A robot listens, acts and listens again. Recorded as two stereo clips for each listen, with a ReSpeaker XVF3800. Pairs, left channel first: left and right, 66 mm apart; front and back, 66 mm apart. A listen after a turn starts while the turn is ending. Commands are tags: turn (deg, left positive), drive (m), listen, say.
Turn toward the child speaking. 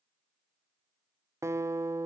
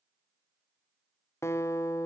<listen/>
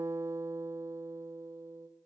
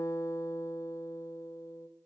<listen/>
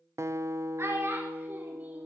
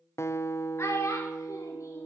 <turn deg="-40"/>
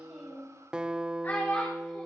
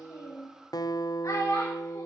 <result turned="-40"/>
<turn deg="30"/>
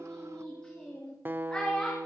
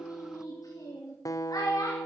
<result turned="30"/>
<turn deg="15"/>
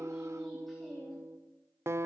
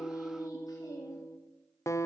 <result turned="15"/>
<listen/>
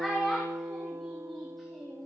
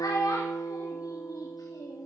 <say>Found it: a child speaking, straight ahead, 2 to 4 m away.</say>